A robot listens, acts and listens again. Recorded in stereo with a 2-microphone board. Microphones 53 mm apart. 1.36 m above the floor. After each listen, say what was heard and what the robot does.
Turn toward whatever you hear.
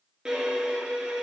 Turn 30° right.
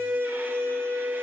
So it is at 135° right. Turn 135° right.
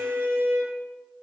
The violin is now 55° right. Turn 55° right.
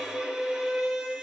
The violin is now 10° right. Turn 10° right.
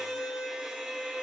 Found it: a violin, straight ahead, 2 to 4 m away.